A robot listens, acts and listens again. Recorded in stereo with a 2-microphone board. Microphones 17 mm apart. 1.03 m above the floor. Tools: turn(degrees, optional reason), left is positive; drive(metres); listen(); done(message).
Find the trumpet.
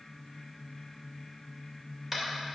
listen()
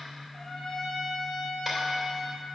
turn(degrees=20, reason="The trumpet: about 20° left or 160° left.")
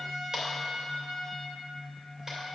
done("Facing the trumpet, 2 to 4 m away.")